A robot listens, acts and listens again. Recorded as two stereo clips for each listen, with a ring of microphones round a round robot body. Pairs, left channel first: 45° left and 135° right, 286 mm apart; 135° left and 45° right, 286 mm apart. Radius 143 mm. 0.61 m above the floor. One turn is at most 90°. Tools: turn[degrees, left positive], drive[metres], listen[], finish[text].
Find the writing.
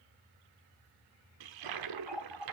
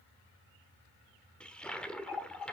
Action: listen[]
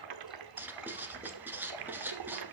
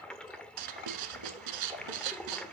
Thought: The writing: 50° right.
Action: turn[-50]
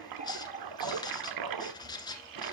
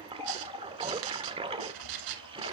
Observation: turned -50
Thought: The writing is now 30° right.
Action: turn[-30]
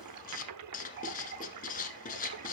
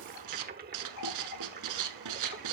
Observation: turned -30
Thought: The writing is now 20° right.
Action: turn[-20]
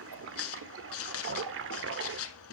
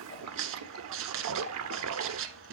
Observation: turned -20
Action: finish[Found it: writing, straight ahead.]